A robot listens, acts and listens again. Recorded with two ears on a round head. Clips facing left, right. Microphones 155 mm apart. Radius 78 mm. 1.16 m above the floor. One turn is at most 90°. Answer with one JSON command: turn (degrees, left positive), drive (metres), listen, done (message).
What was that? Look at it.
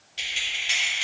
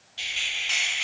{"turn": 30}
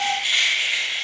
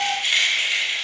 {"turn": -40}
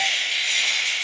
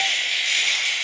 {"turn": -25}
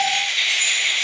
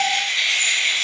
{"turn": -10}
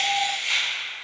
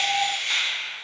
{"done": "Facing the keys jangling, 2 to 4 m away."}